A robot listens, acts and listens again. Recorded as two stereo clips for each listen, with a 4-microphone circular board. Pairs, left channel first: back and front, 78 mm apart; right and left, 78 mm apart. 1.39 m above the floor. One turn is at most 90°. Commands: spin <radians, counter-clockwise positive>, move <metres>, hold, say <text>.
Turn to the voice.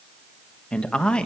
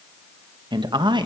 spin 1.57
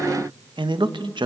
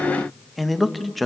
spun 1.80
say Found it: a man speaking, straight ahead.